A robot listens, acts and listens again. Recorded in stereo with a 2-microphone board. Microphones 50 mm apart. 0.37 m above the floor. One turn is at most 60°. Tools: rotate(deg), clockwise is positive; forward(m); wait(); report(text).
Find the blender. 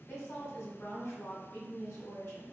wait()
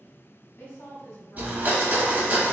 rotate(30)
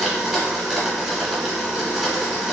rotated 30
report("Found it: a blender, straight ahead, 1 to 2 m away.")